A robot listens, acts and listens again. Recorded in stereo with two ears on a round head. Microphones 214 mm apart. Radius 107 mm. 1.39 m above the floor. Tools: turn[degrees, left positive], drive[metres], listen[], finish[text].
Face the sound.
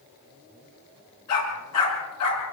Thought: The dog barking: about 75° left or 105° left.
Action: turn[75]
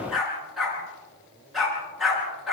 Action: finish[Found it: a dog barking, straight ahead.]